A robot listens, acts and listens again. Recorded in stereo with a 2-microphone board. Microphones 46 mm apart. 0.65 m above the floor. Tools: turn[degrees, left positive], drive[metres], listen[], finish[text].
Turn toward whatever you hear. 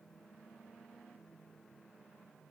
Action: listen[]
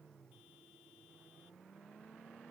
Action: listen[]
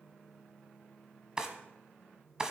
Thought: The drawer: about 20° right or 160° right.
Action: turn[-20]
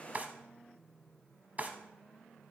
Thought: So it is at 140° right.
Action: turn[-140]
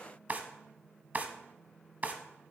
Thought: The drawer is now 40° right.
Action: turn[-40]
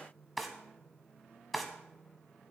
Action: finish[Facing the drawer, 1 to 2 m away.]